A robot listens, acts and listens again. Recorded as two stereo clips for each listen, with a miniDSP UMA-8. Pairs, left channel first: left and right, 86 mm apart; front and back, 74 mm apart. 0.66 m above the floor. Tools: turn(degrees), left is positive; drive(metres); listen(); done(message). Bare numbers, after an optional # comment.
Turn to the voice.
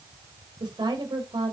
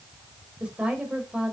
# The woman speaking: 105° right.
turn(-105)
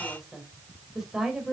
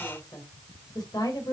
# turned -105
done("Facing the woman speaking.")